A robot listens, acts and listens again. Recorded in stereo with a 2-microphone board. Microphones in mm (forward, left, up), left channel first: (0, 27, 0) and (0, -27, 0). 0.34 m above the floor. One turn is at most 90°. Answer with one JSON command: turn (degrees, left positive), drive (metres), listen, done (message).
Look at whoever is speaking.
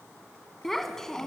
{"turn": 30}
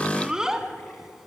{"turn": -10}
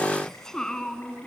{"turn": 15}
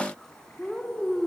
{"turn": 10}
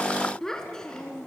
{"turn": 10}
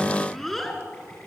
{"done": "Facing the child speaking."}